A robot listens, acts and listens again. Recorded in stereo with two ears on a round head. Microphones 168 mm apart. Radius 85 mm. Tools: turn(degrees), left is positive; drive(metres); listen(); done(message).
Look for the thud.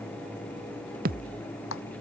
turn(degrees=-50)
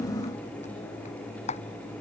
listen()
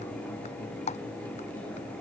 done("I heard a thud, but can't make it out now. It was about straight ahead or 80° right.")